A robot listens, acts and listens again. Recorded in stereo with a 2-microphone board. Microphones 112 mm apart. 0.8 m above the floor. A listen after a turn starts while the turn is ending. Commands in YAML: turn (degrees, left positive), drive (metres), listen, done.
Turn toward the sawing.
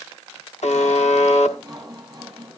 turn: -30
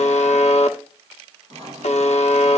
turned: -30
turn: -120
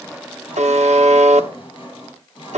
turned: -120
turn: 45
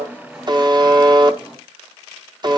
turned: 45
turn: -10
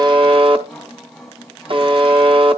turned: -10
done: "Facing the sawing, over 4 m away."